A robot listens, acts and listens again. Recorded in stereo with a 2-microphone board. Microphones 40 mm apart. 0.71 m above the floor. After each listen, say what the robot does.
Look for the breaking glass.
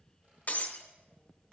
Turn 40° left.
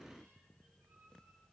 Keep listening.
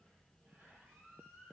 I heard breaking glass, but can't make it out now. It was about straight ahead or 100° left.